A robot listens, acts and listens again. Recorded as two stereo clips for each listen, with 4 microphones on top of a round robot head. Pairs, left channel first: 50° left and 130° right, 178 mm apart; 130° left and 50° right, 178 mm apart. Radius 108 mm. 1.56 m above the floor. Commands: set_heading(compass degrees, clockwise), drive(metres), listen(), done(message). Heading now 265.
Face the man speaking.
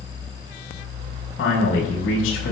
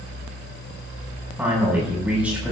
set_heading(230)
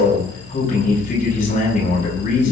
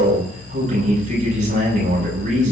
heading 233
done("Found it: a man speaking, straight ahead.")